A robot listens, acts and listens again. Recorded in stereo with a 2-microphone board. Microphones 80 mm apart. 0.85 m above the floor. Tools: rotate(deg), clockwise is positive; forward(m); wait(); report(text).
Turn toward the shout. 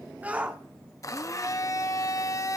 rotate(15)
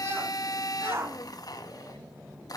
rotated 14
rotate(150)
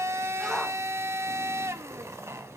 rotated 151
report("Facing the shout, 1 to 2 m away.")